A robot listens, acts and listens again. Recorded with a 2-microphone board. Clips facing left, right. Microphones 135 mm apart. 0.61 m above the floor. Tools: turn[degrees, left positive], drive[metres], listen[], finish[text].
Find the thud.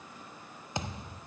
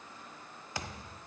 Thought: The thud: about 25° left or 155° left.
Action: turn[25]
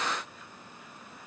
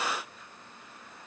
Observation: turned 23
Action: listen[]
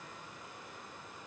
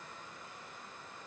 Action: finish[I heard a thud, but can't make it out now. It was about straight ahead or 130° left.]